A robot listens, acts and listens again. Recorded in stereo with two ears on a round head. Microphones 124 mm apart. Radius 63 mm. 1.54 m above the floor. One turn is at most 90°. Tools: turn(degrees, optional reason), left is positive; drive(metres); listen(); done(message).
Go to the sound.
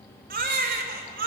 turn(degrees=-70, reason="The baby crying: about 70° right or 110° right.")
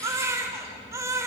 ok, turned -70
turn(degrees=-20, reason="So it is at 20° right.")
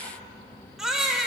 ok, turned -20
drive(metres=1.0)
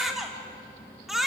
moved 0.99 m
drive(metres=1.0)
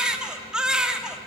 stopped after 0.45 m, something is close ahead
done("I am next to the baby crying.")